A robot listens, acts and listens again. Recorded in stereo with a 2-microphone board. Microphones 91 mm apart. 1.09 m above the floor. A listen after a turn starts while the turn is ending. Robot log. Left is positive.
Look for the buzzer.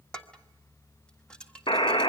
note: The buzzer: about 65° left or 115° left.
cmd yaw +65
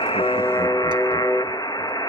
note: So it is at 50° left.
cmd yaw +50
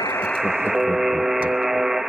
end: Facing the buzzer.